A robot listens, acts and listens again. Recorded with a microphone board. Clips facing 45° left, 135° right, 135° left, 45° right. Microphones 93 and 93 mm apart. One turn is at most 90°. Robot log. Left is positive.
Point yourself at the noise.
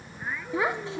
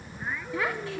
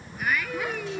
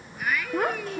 note: The child speaking: 20° right.
cmd yaw -20
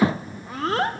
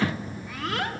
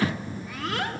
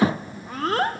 end: Facing the child speaking.